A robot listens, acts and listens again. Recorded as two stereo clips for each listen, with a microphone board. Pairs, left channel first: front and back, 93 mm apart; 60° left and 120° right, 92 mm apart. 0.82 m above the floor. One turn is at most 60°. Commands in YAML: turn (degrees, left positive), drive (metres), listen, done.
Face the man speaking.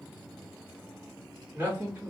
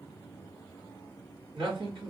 turn: -60
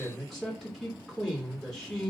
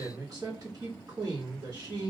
turn: -60
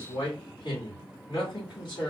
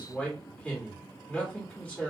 turn: -10
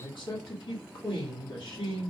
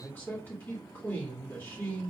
done: "Found it: a man speaking, straight ahead."